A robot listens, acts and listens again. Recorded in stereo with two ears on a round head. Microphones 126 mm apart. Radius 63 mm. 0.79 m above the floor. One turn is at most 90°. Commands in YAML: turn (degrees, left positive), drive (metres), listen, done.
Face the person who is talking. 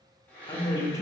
turn: 25
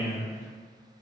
turn: 90
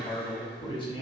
turn: 35
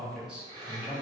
done: "Found it: a man speaking, straight ahead, under 1 m away."